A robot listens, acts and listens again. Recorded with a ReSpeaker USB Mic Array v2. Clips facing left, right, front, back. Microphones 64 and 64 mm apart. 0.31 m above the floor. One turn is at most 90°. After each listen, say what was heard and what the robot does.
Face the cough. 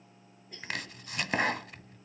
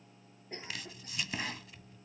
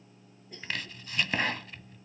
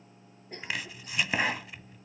The cough: 140° right. Turn 90° right.
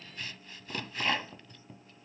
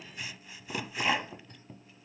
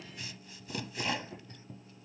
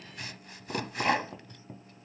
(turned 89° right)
Nothing new. It was at 50° right. Turn 50° right.
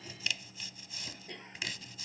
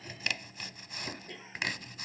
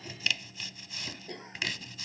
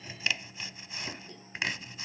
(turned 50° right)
Facing the cough.